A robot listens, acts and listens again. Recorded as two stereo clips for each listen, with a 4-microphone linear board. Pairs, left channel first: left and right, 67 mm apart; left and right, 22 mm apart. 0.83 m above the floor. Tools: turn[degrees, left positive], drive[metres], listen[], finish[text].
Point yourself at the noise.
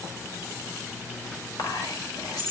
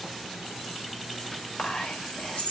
Action: turn[90]
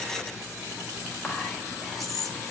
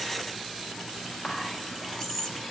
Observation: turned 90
Action: finish[Found it: whispering, straight ahead.]